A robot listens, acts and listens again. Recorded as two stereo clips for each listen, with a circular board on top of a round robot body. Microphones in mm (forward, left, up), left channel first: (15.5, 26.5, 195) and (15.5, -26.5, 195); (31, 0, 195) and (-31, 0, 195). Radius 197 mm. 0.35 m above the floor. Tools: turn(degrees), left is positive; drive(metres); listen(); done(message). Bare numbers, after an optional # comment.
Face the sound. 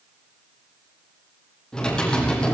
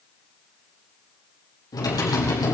# The typing on a keyboard: 15° left.
turn(15)
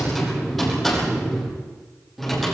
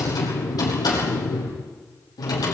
done("Found it: typing on a keyboard, straight ahead.")